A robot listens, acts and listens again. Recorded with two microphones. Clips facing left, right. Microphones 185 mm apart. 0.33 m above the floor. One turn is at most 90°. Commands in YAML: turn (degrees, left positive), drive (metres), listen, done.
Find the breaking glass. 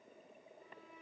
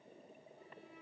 listen: true
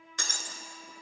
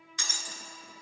turn: 60
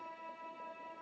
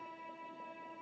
listen: true
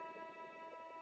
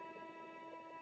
done: "I heard breaking glass, but can't make it out now. It was about straight ahead or 60° left."